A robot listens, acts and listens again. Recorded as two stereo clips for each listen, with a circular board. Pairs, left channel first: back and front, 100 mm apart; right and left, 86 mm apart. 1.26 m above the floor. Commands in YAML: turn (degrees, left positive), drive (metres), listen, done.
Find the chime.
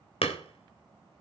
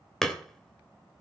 listen: true
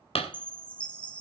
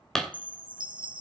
turn: 105
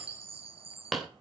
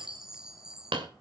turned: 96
turn: 10
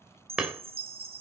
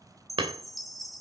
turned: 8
done: "Facing the chime, 1 to 2 m away."